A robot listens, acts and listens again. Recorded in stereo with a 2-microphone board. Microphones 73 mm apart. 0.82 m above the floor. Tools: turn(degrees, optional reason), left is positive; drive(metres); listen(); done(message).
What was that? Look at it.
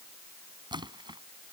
turn(degrees=-90)
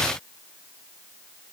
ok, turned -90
done("I heard a splash from this way, but can't make it out now.")